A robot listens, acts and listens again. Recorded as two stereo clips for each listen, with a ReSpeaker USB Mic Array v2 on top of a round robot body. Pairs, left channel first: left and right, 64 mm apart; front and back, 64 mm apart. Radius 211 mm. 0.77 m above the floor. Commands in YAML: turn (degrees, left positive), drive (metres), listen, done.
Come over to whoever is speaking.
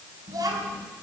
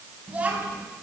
turn: -110
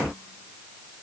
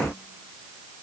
listen: true
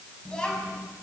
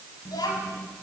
turn: 10
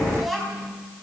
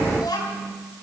drive: 1.0
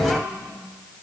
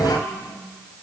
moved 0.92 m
drive: 1.0
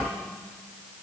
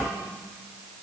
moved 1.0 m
drive: 1.0
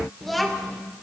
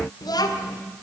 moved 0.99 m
drive: 1.0
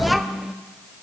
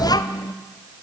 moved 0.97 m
drive: 1.0
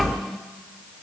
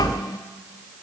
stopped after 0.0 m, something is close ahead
done: "I am next to the child speaking."